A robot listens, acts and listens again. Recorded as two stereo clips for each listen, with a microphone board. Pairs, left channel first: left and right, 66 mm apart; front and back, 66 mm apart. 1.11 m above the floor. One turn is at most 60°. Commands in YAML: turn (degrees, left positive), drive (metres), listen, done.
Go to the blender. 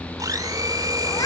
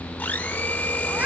turn: -60
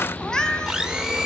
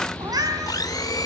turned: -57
drive: 1.0
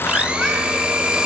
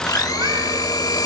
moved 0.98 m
turn: -15
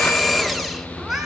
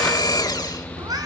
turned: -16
drive: 1.0
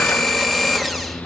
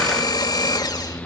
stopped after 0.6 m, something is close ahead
done: "I am next to the blender."